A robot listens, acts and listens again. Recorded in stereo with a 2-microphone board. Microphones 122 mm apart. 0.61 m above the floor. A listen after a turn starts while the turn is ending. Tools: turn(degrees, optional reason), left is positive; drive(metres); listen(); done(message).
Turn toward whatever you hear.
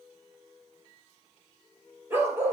turn(degrees=-20, reason="The dog barking: about 20° right or 160° right.")
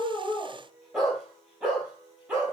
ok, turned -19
turn(degrees=-30)
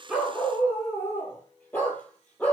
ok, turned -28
turn(degrees=15, reason="So it is at 15° left.")
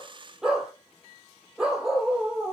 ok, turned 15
done("Found it: a dog barking, straight ahead, over 4 m away.")